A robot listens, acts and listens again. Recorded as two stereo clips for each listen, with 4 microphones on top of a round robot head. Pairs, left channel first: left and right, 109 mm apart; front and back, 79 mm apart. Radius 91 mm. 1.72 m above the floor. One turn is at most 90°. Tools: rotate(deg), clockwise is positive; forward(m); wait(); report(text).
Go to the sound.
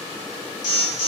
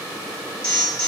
rotate(-80)
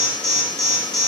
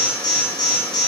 rotate(-35)
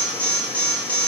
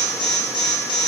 rotate(-10)
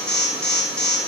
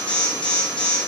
forward(1.0)
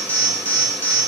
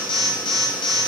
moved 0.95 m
rotate(-15)
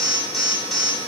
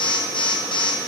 forward(1.0)
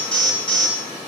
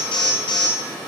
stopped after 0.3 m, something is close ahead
report("Arrived at the alarm, straight ahead.")